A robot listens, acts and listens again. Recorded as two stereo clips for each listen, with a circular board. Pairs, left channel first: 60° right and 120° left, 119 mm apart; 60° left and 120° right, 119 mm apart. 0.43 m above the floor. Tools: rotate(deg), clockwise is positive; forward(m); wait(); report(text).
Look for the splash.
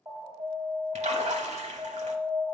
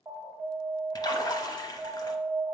rotate(-110)
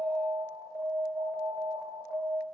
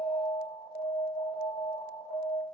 report("I heard a splash from this way, but can't make it out now.")